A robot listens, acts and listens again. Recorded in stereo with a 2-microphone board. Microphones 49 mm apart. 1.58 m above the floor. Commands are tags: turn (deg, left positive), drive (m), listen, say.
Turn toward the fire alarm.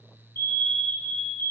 <turn deg="55"/>
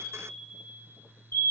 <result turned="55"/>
<turn deg="65"/>
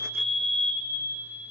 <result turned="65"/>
<say>Found it: a fire alarm, straight ahead, 1 to 2 m away.</say>